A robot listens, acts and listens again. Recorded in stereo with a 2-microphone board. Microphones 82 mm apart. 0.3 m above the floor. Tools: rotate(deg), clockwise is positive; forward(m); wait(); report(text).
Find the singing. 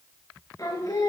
rotate(-50)
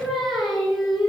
report("Facing the singing, over 4 m away.")